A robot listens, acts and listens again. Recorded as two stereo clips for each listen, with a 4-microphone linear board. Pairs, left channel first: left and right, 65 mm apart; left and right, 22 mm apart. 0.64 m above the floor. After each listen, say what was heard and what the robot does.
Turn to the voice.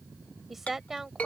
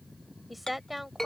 Turn 30° right.
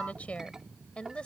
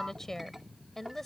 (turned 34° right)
So it is at 15° left. Turn 15° left.
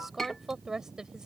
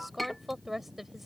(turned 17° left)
The woman speaking is now 10° right. Turn 10° right.
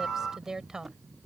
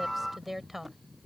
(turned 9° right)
The woman speaking is now 10° right. Turn 10° right.
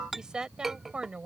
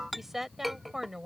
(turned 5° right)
The woman speaking is now 15° right. Turn 15° right.
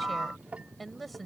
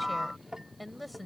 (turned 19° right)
Facing the woman speaking.